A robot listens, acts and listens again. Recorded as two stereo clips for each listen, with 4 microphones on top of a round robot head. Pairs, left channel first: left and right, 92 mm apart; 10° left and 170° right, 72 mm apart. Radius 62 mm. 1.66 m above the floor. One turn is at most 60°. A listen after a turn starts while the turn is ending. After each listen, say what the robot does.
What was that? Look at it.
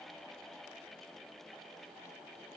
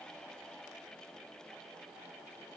Keep listening.
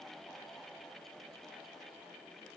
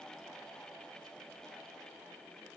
Keep listening.
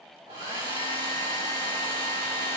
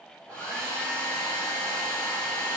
Turn 60° right.
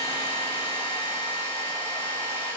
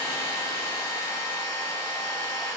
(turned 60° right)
Turn 35° right.
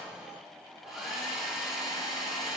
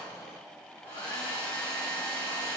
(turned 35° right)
Facing the hair dryer, 2 to 4 m away.